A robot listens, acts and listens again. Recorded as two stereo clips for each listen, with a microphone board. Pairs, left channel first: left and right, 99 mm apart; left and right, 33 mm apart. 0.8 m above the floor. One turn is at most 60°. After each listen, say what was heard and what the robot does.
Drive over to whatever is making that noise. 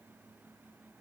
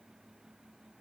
Keep listening.
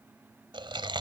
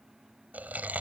The chewing: about 55° right or 125° right. Turn 55° right.
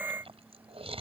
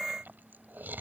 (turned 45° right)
So it is at 85° right. Turn 60° right.
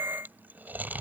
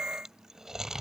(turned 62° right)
The chewing is now 20° right. Turn 20° right.
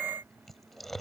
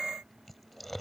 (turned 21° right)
Drive 1.0 m forward.
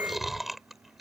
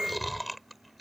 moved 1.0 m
Drive 1.0 m forward.
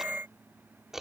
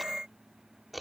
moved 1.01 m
Drive 1.0 m forward.
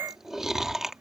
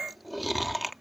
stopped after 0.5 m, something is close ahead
Arrived at the chewing, straight ahead.